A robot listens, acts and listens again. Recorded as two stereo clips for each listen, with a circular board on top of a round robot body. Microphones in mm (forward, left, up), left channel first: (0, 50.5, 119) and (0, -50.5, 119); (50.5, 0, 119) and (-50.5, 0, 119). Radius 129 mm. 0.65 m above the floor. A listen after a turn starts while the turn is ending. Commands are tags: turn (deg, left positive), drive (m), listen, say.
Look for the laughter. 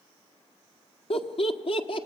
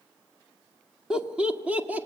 <turn deg="105"/>
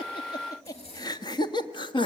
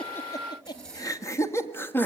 <turn deg="65"/>
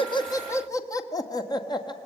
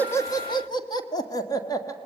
<turn deg="50"/>
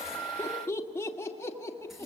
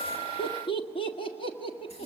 <turn deg="25"/>
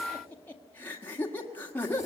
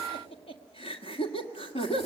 <turn deg="20"/>
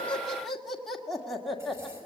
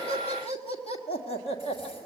<say>Facing the laughter, 2 to 4 m away.</say>